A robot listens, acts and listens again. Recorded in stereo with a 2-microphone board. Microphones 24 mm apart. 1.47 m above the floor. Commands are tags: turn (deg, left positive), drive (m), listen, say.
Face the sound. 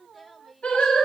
<turn deg="65"/>
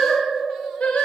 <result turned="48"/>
<turn deg="70"/>
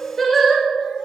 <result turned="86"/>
<turn deg="10"/>
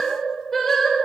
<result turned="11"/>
<turn deg="15"/>
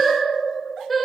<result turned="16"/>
<say>Found it: singing, straight ahead.</say>